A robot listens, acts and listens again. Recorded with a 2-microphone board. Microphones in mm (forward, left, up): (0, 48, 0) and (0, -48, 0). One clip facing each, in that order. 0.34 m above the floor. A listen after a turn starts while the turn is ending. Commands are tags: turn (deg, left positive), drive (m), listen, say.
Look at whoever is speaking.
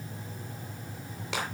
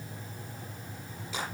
<listen/>
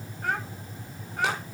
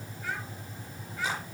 <turn deg="55"/>
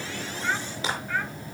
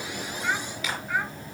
<turn deg="-15"/>
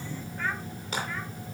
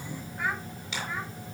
<turn deg="-15"/>
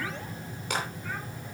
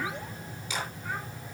<listen/>
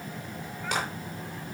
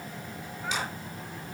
<listen/>
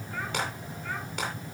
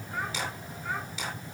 <turn deg="-20"/>
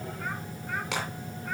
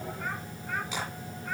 <listen/>
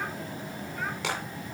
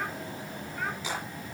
<listen/>
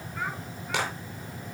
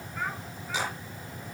<say>Found it: a child speaking, straight ahead.</say>